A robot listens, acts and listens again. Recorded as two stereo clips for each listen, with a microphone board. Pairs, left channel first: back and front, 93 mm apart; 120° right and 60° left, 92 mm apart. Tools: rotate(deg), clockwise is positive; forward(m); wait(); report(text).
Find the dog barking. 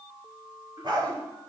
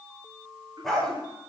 rotate(30)
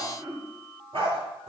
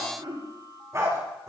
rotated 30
rotate(-10)
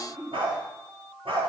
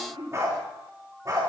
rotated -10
rotate(-10)
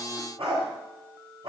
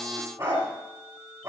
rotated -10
report("Facing the dog barking.")